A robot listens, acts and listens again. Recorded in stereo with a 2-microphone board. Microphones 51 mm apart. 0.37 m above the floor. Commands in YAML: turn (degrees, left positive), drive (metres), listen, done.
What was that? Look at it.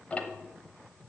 turn: 25
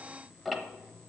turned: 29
done: "Found it: ticking, straight ahead, under 1 m away."